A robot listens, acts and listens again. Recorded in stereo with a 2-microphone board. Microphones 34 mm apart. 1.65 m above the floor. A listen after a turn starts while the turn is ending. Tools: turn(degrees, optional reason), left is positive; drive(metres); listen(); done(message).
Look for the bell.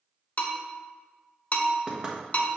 turn(degrees=40, reason="The bell: about 40° left or 140° left.")
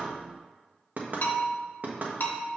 turn(degrees=90, reason="So it is at 90° left.")
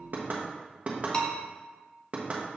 turn(degrees=25, reason="The bell is now 25° left.")
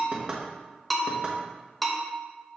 done("Found it: a bell, straight ahead, under 1 m away.")